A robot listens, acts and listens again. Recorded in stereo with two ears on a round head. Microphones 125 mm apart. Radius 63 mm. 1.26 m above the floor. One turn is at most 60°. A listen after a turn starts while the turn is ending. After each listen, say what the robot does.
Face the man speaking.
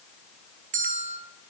Keep listening.
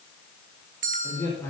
Turn 15° left.
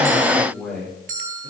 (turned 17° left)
Turn 30° left.
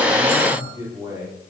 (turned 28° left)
Turn 20° right.
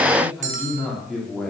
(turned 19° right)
Found it: a man speaking, straight ahead.